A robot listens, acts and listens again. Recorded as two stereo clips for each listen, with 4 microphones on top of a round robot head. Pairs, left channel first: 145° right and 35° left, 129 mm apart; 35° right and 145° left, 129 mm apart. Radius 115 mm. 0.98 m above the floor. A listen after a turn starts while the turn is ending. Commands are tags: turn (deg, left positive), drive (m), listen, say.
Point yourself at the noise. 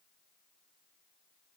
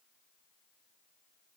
<listen/>
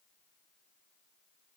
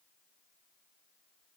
<listen/>
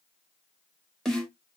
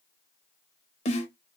<turn deg="-60"/>
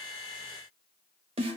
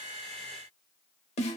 <say>Facing the snare drum.</say>